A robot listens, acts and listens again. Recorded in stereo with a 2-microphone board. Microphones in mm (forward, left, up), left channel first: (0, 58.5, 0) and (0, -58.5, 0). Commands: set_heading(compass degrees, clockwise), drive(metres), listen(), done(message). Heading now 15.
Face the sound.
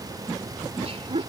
set_heading(75)
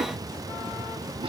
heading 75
listen()
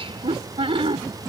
set_heading(130)
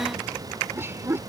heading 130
set_heading(155)
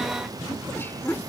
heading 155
set_heading(135)
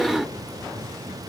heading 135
done("Found it: laughter, straight ahead.")